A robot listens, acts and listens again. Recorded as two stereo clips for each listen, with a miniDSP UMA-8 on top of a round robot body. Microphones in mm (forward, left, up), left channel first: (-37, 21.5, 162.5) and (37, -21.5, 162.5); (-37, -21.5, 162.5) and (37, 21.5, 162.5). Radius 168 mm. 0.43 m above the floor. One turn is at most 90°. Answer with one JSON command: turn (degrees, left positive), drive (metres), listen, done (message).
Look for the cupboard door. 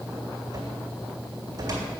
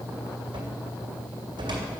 {"turn": 15}
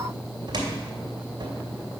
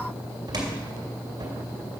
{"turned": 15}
{"done": "Facing the cupboard door."}